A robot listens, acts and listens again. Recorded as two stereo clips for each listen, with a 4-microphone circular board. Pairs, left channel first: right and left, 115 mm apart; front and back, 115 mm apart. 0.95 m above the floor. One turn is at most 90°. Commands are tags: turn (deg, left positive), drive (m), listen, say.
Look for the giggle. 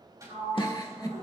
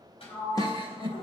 <turn deg="-90"/>
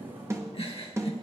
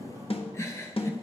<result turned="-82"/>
<turn deg="-60"/>
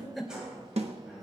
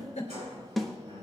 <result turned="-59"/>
<say>Found it: a giggle, straight ahead.</say>